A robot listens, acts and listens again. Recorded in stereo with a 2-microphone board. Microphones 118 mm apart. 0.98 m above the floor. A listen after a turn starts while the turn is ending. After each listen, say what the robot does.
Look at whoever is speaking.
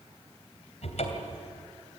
Keep listening.
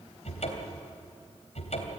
Keep listening.
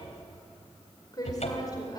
Turn 35° left.
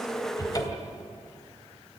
Keep listening.
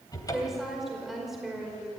Found it: a woman speaking, straight ahead, over 4 m away.